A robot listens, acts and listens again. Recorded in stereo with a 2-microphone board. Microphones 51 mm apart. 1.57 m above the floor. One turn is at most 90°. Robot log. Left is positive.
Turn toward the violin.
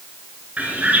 cmd idle
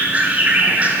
cmd idle
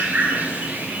end: I can't make out a violin, only a bird.